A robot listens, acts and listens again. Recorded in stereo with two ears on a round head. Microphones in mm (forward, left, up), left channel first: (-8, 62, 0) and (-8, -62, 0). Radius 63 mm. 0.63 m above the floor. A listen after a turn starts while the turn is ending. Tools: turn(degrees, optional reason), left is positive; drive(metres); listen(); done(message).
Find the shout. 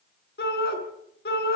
turn(degrees=90)
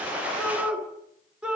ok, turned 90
done("Facing the shout, over 4 m away.")